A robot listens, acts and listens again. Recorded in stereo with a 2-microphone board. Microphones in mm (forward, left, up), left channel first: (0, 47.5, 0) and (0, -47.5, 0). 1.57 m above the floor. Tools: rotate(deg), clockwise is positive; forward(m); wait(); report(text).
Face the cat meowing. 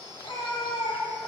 rotate(-75)
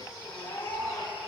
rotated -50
rotate(-50)
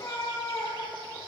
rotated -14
rotate(-40)
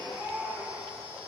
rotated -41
report("Facing the cat meowing.")